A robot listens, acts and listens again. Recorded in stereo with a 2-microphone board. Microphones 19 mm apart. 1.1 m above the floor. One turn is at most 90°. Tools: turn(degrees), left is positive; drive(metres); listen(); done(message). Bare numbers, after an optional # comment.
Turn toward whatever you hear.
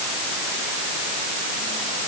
listen()
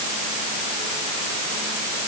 listen()
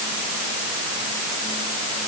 done("I can't make out anything to turn to.")